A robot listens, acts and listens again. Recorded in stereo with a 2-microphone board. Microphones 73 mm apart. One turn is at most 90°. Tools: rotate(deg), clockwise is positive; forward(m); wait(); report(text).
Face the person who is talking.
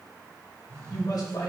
rotate(-65)
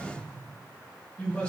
rotate(-20)
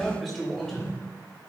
report("Facing the man speaking, 2 to 4 m away.")